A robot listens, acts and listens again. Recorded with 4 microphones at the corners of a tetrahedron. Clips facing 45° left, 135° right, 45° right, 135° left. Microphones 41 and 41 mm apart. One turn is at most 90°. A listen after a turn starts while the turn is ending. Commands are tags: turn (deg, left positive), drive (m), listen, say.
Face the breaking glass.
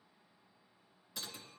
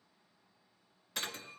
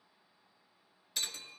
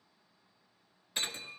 <turn deg="-90"/>
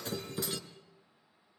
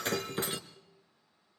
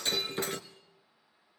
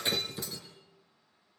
<turn deg="-70"/>
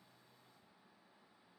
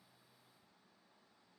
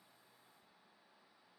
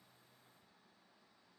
<say>Facing where the breaking glass came from. I can't hear it now.</say>